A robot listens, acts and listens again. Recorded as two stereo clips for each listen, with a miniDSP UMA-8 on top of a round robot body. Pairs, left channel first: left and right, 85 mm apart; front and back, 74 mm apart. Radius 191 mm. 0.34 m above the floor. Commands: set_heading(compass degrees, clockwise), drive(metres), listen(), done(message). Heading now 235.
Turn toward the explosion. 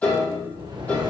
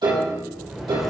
set_heading(330)
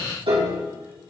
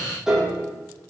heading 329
done("Facing where the explosion came from. I can't hear it now.")